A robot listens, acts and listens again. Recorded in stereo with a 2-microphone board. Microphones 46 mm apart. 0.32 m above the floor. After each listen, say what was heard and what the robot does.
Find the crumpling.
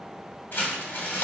The crumpling: about 50° left or 130° left. Turn 50° left.
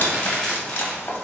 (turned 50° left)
So it is at 10° left. Turn 10° left.
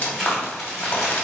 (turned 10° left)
Facing the crumpling.